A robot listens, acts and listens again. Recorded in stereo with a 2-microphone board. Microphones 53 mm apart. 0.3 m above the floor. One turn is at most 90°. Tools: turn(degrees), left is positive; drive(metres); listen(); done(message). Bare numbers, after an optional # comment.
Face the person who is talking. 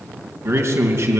# The man speaking: about 50° right or 130° right.
turn(-50)
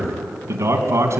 # So it is at 70° right.
turn(-70)
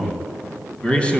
# The man speaking is now 20° left.
turn(20)
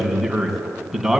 done("Found it: a man speaking, straight ahead.")